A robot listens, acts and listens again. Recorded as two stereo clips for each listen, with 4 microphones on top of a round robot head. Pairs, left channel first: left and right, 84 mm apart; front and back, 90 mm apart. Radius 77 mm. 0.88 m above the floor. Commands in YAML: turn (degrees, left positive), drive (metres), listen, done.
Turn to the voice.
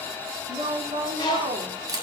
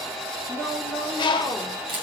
turn: -105
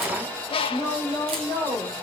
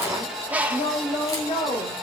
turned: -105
turn: -40
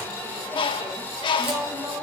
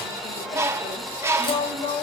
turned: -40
turn: -30
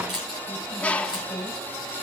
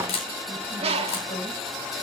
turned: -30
listen: true
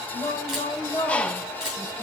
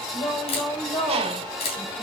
turn: 20
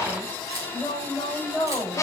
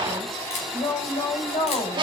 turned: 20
done: "Facing the woman speaking."